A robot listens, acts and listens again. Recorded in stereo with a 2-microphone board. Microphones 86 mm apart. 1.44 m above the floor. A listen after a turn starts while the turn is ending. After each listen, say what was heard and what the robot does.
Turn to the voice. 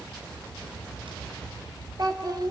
The child speaking: about 50° right or 130° right. Turn 50° right.
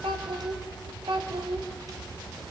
So it is at 80° right. Turn 80° right.
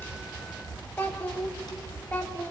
The child speaking is now 20° left. Turn 20° left.
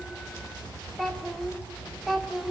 Facing the child speaking, 2 to 4 m away.